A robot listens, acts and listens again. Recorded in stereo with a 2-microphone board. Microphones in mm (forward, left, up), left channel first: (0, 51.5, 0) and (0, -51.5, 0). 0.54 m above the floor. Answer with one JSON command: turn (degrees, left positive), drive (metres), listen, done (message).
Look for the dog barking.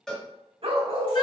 {"turn": -75}
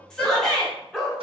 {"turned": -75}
{"done": "Facing the dog barking."}